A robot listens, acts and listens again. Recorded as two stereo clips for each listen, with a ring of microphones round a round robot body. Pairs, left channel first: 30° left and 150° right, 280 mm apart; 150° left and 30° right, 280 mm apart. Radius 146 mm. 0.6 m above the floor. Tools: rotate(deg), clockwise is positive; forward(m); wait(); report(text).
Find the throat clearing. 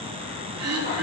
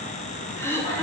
rotate(130)
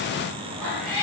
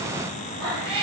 wait()
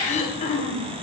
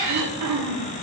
rotate(35)
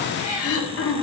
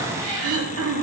report("Found it: throat clearing, straight ahead, 1 to 2 m away.")